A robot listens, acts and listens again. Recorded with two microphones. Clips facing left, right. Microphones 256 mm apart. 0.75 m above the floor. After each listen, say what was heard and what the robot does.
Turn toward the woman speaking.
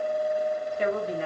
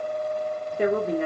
The woman speaking: about 55° right or 125° right. Turn 55° right.
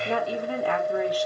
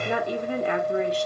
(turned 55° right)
So it is at 25° right. Turn 25° right.
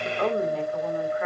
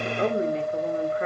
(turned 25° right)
The woman speaking is now 35° right. Turn 35° right.
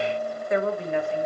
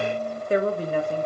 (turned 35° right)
The woman speaking is now 40° right. Turn 40° right.
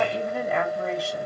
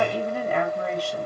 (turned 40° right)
Facing the woman speaking.